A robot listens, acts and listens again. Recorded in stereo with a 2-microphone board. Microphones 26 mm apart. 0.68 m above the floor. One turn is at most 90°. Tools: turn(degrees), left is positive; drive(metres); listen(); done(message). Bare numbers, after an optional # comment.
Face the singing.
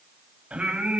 # The singing: about 50° right or 130° right.
turn(-50)
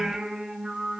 done("Facing the singing.")